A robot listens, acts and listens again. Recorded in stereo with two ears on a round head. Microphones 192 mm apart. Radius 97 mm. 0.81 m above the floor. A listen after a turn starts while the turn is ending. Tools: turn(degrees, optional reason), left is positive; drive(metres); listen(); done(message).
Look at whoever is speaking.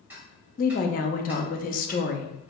turn(degrees=40, reason="The woman speaking: about 40° left or 140° left.")
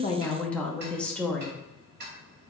done("Found it: a woman speaking, straight ahead, under 1 m away.")